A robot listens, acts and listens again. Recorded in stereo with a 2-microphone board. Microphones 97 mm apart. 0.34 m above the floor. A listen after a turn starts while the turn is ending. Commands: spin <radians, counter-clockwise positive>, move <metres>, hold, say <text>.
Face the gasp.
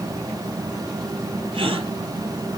spin -1.05
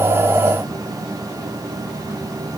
hold
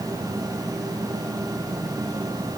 say I heard a gasp, but can't make it out now. It was about straight ahead or 60° right.